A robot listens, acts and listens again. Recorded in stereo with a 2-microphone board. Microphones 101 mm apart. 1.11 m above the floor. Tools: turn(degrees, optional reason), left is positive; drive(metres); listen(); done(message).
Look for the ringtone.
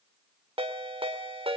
turn(degrees=-65, reason="The ringtone: about 65° right or 115° right.")
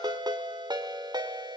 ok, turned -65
turn(degrees=-45, reason="So it is at 45° right.")
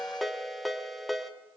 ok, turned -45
done("Facing the ringtone.")